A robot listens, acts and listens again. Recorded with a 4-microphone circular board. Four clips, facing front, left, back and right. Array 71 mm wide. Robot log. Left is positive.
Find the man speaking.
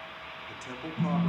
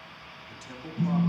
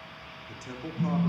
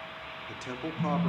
note: The man speaking: 80° right.
cmd yaw -80
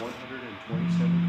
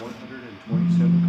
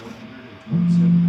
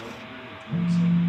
note: The man speaking is now 40° left.
cmd yaw +40
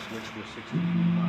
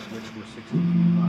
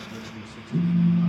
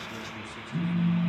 note: The man speaking is now 30° left.
cmd yaw +30
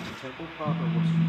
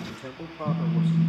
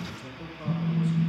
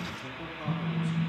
note: The man speaking is now 25° left.
cmd yaw +25
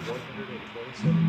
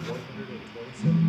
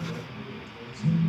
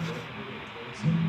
note: The man speaking is now 15° left.
cmd yaw +15
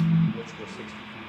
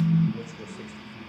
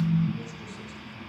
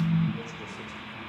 cmd idle
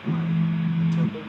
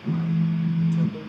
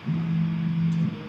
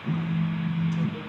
cmd idle
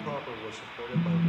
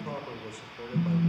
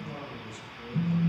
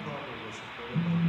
end: Found it: a man speaking, straight ahead.